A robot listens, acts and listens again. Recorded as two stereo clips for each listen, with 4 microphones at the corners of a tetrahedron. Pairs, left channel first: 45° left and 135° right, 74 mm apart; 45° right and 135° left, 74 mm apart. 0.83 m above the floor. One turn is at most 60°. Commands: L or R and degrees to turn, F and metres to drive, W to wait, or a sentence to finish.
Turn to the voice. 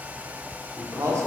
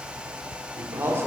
R60
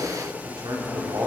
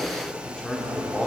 R60
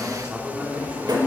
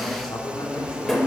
R60
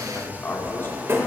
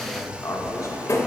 R10
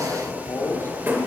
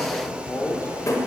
Facing the man speaking.